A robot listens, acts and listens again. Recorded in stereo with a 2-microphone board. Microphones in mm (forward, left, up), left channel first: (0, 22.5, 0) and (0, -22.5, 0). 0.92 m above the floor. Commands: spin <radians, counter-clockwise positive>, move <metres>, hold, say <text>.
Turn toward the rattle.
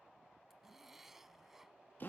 hold
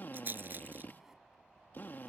spin -0.79
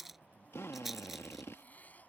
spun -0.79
say Facing the rattle.